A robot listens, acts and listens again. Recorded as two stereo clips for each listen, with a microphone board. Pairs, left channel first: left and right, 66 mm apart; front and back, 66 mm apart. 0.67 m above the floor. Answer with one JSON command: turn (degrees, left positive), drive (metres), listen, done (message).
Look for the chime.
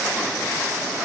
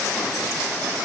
{"listen": true}
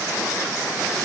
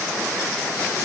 {"listen": true}
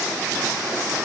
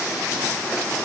{"done": "I can't make out a chime to turn to."}